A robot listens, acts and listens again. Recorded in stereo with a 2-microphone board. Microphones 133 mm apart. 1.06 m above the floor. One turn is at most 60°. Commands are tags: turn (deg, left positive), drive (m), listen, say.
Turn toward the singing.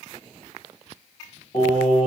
<turn deg="50"/>
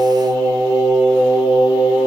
<turn deg="45"/>
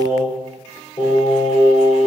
<turn deg="60"/>
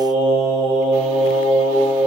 <turn deg="35"/>
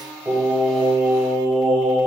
<say>Facing the singing.</say>